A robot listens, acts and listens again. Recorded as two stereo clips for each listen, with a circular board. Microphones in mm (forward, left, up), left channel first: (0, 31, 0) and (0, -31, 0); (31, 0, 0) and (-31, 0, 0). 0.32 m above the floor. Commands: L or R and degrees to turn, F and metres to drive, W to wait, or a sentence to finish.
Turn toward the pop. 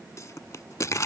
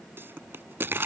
L130
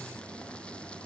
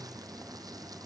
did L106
L20
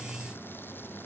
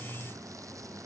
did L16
I heard a pop from this way, but can't make it out now.